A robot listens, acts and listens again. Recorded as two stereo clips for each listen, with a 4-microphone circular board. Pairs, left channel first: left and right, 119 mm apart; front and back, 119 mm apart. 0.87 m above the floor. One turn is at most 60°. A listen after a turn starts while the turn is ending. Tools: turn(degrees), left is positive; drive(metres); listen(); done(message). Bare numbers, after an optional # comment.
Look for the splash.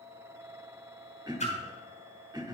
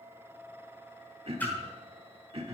# The splash: 75° left.
turn(60)
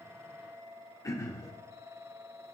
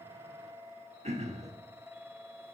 # Nothing new. It was at 15° left.
turn(15)
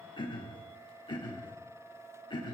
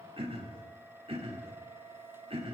done("Facing where the splash came from. I can't hear it now.")